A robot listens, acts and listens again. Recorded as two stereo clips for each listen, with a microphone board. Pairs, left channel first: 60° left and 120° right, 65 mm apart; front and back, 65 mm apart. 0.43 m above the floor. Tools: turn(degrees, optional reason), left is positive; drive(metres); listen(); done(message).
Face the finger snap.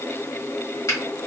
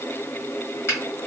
turn(degrees=45, reason="The finger snap: 45° left.")
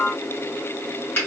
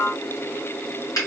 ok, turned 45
done("Facing the finger snap, 1 to 2 m away.")